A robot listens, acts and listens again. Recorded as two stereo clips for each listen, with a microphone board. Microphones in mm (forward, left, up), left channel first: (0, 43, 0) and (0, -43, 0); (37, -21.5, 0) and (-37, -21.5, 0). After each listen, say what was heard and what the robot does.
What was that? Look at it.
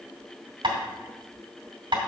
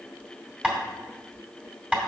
The tapping: 110° right. Turn 110° right.
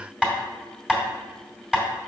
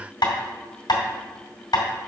The tapping is now 10° right. Turn 10° right.
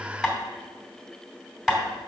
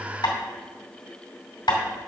Found it: tapping, straight ahead, 2 to 4 m away.